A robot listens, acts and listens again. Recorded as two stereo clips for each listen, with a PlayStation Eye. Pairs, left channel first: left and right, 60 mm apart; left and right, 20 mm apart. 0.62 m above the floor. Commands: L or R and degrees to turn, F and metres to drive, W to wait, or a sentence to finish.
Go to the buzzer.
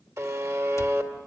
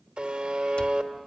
R65
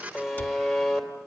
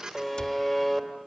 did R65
F1.0
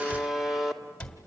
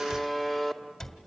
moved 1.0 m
F1.0
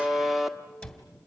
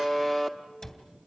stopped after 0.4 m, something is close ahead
Arrived at the buzzer, straight ahead.